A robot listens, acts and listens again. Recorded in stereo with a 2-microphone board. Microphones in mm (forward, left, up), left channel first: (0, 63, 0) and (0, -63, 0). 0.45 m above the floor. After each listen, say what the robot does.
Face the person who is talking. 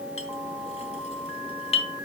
Keep listening.
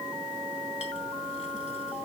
Keep listening.
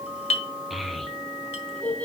Turn 30° left.
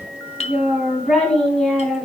Turn 30° left.
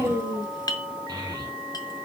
Turn 30° right.
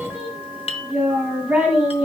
Found it: a child speaking, straight ahead, 1 to 2 m away.